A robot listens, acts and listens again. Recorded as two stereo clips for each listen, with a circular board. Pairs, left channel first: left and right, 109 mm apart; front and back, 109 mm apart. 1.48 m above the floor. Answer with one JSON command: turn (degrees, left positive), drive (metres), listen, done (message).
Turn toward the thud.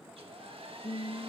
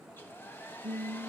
{"listen": true}
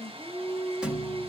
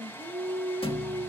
{"turn": -10}
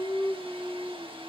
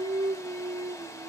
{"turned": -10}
{"done": "I heard a thud from this way, but can't make it out now."}